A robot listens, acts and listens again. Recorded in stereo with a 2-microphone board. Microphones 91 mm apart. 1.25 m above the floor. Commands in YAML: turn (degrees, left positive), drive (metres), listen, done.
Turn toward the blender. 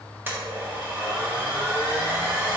turn: -20
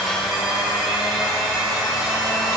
done: "Facing the blender, 1 to 2 m away."